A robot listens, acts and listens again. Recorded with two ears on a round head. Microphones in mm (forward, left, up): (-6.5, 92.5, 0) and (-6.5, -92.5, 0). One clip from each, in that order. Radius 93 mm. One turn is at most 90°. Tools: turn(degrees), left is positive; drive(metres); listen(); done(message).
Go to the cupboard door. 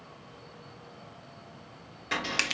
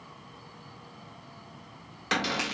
turn(degrees=-45)
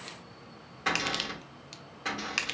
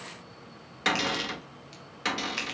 turn(degrees=-90)
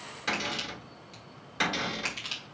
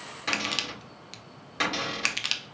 drive(metres=1.0)
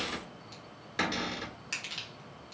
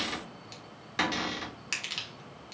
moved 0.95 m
turn(degrees=-10)
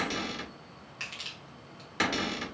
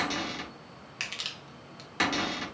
drive(metres=1.0)
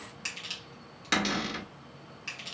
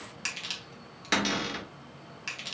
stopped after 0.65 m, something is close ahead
done("Arrived at the cupboard door, straight ahead.")